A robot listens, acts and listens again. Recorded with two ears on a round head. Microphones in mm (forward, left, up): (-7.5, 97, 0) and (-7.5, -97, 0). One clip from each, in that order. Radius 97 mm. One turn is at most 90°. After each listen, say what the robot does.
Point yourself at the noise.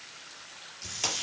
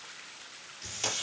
Turn 30° left.
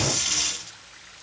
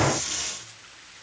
Turn 90° left.
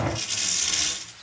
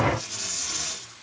Turn 75° left.
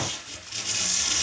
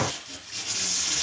Turn 15° left.
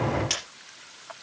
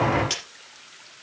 Facing the tape being pulled.